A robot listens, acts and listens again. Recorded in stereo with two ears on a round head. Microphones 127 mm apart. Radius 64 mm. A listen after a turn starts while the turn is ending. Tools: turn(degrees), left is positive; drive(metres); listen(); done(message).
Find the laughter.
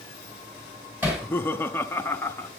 turn(degrees=15)
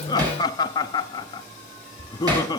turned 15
turn(degrees=155)
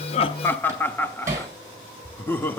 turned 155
turn(degrees=15)
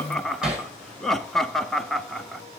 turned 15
done("Facing the laughter.")